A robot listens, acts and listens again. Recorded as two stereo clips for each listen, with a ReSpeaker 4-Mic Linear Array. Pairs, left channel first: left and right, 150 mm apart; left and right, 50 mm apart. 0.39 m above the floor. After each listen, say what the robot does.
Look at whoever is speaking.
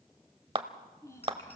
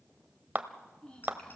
Turn 20° left.
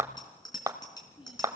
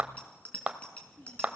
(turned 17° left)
Turn 145° left.
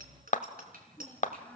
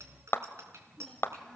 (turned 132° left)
Turn 10° left.
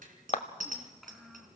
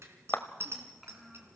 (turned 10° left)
Found it: a child speaking, straight ahead, 2 to 4 m away.